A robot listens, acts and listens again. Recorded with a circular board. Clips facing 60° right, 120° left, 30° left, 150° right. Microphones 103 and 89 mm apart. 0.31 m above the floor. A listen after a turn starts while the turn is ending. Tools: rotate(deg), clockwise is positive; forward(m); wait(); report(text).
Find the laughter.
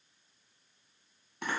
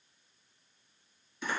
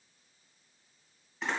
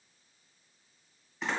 wait()
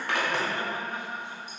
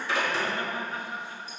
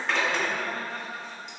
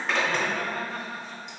rotate(120)
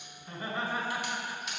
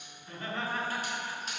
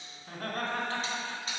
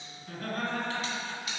rotate(-20)
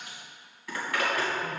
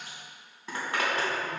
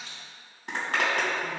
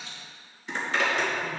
wait()
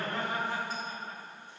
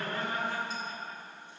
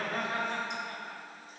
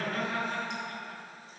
report("Facing the laughter.")